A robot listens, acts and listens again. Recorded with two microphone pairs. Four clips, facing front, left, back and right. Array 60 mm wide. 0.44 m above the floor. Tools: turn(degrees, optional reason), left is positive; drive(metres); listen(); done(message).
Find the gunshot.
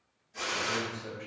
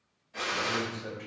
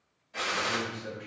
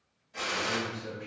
turn(degrees=170, reason="The gunshot: 170° left.")
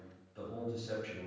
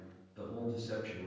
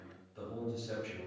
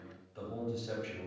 done("Facing where the gunshot came from. I can't hear it now.")